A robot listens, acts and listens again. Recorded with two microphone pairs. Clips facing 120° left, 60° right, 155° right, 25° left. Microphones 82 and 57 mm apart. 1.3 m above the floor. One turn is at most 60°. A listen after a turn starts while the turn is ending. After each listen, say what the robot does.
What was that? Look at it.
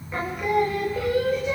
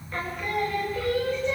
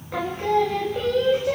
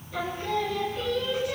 Turn 60° right.
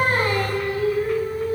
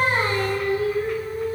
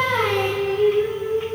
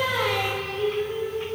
Turn 60° right.
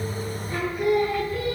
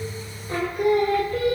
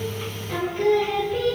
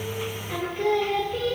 Turn 55° right.
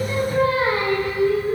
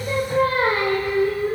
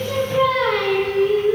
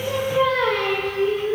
Turn 30° right.
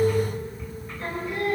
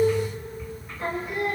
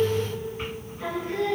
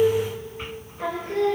Turn 10° left.
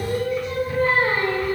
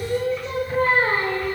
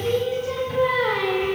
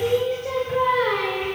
Found it: singing, straight ahead, over 4 m away.